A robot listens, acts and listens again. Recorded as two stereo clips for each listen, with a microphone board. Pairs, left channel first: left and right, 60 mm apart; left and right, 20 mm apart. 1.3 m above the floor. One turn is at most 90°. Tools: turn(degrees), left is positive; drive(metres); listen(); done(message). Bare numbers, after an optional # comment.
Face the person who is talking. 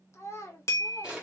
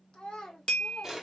# The child speaking: about 55° left or 125° left.
turn(55)
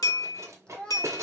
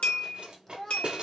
# So it is at 15° left.
turn(15)
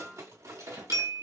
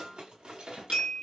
listen()
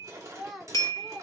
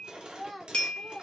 done("Found it: a child speaking, straight ahead.")